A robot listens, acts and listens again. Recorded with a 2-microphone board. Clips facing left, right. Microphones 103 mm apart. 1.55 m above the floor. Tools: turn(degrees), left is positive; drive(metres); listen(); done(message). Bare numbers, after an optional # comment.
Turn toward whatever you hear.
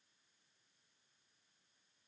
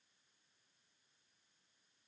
listen()
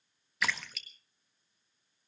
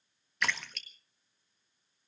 turn(30)
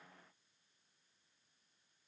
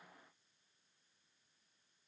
listen()
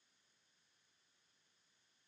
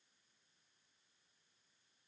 done("I heard a splash, but can't make it out now. It was about 25° right or 145° left.")